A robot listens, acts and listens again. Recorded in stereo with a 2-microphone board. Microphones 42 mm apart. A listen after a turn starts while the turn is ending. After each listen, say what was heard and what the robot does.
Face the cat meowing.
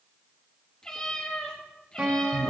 The cat meowing: about 20° left or 160° left. Turn 20° left.
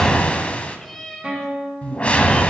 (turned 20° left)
Turn 30° left.
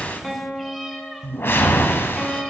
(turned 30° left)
Found it: a cat meowing, straight ahead, 2 to 4 m away.